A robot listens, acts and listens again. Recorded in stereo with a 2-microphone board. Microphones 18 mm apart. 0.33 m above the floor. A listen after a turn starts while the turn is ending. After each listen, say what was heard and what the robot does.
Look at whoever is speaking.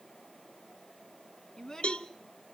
The child speaking: about 30° left or 150° left. Turn 30° left.
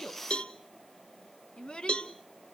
So it is at 120° left. Turn 120° left.
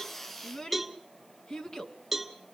The child speaking is now 40° left. Turn 40° left.
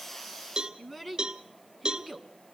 Found it: a child speaking, straight ahead, 1 to 2 m away.